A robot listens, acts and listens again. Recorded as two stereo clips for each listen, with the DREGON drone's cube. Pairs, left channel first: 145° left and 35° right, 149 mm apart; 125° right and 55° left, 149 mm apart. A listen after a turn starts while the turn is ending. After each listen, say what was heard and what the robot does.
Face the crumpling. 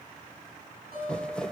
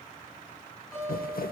The crumpling: 130° right. Turn 130° right.
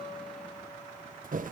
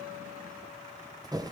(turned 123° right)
The crumpling is now 10° right. Turn 10° right.
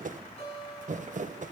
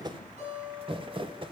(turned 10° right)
Facing the crumpling.